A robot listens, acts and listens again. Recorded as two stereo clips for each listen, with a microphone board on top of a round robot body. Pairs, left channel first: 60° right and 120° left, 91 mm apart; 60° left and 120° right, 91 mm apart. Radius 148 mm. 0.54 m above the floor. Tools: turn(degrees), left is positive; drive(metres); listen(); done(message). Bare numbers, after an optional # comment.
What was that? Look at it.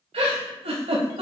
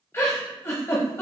# The giggle: 125° left.
turn(125)
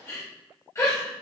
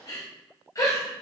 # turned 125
done("Found it: a giggle, straight ahead.")